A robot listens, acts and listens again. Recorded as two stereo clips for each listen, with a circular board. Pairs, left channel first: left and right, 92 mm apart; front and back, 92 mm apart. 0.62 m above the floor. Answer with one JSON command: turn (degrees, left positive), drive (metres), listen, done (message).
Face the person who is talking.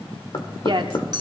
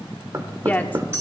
{"turn": -70}
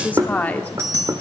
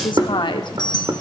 {"turn": 20}
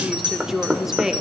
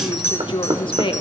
{"done": "Found it: a woman speaking, straight ahead."}